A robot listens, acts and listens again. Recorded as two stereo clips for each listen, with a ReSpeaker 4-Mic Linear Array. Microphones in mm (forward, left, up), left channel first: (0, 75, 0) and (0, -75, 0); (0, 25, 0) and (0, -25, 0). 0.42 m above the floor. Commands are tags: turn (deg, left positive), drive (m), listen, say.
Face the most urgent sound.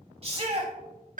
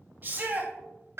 <turn deg="-40"/>
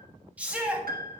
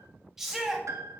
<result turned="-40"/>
<turn deg="-10"/>
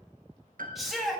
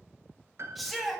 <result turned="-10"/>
<say>Found it: a shout, straight ahead.</say>